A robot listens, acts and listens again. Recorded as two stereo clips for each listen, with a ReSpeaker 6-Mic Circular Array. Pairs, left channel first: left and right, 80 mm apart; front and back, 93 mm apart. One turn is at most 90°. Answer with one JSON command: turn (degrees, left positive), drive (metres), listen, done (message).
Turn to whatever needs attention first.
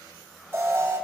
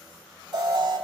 {"turn": -90}
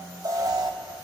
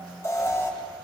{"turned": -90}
{"turn": -60}
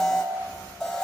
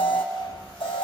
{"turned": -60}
{"done": "Found it: an alarm, straight ahead."}